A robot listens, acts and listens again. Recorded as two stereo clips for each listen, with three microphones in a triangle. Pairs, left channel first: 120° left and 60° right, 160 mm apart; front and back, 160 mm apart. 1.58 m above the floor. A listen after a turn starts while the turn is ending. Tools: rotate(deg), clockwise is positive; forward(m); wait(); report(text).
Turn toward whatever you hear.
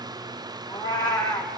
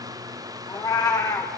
rotate(-65)
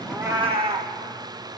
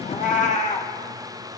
rotate(20)
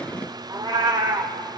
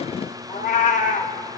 report("Facing the cat meowing.")